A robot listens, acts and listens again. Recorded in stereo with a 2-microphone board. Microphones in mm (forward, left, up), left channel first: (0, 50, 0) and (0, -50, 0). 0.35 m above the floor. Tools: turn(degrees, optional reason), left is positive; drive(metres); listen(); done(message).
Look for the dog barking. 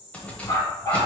turn(degrees=35, reason="The dog barking: about 35° left or 145° left.")
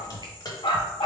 turn(degrees=125, reason="So it is at 125° left.")
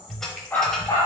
turn(degrees=25, reason="The dog barking is now 25° left.")
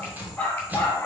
turn(degrees=25, reason="The dog barking is now 25° left.")
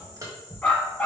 turn(degrees=15, reason="The dog barking is now 15° left.")
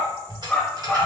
done("Facing the dog barking.")